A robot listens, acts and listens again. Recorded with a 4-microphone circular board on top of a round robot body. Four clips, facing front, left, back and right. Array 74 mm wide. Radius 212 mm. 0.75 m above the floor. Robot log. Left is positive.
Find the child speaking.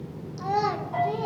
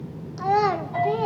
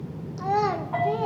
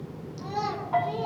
note: The child speaking: 110° left.
cmd yaw +110
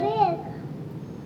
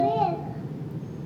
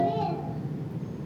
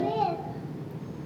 note: The child speaking is now 15° left.
cmd yaw +15
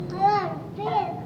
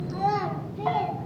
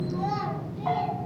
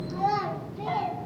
note: The child speaking is now 15° left.
cmd yaw +15
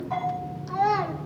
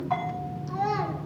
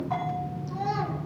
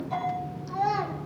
note: The child speaking is now 10° left.
cmd yaw +10
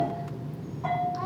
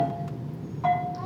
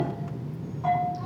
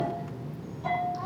cmd idle
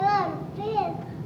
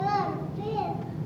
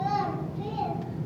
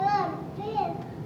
end: Facing the child speaking, 2 to 4 m away.